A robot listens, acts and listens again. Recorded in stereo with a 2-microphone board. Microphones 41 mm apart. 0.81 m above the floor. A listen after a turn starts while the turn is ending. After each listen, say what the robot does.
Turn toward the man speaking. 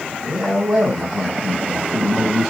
Turn 30° right.
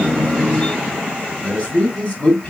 Turn 30° left.
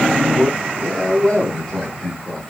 Turn 15° left.
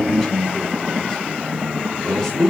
Found it: a man speaking, straight ahead.